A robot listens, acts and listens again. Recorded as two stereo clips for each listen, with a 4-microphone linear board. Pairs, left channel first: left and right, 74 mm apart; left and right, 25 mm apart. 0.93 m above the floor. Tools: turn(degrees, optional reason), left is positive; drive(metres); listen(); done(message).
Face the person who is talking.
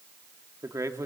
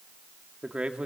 turn(degrees=-45, reason="The man speaking: about 45° right or 135° right.")
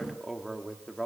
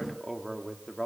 done("Facing the man speaking, 2 to 4 m away.")